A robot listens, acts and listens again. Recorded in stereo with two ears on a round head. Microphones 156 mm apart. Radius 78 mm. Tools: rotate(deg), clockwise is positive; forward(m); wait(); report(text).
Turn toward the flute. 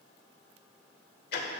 wait()
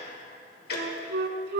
rotate(65)
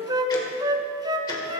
rotate(25)
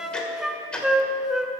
report("Facing the flute, under 1 m away.")